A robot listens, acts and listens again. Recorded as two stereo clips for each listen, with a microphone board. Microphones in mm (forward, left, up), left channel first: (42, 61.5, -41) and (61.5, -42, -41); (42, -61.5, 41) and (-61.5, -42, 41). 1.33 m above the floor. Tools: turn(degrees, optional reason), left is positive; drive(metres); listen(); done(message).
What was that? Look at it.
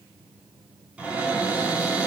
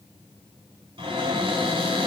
turn(degrees=-160, reason="The cupboard door: 160° right.")
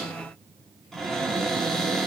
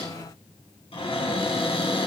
turn(degrees=15, reason="The cupboard door is now 15° left.")
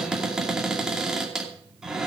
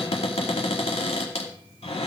done("Facing the cupboard door.")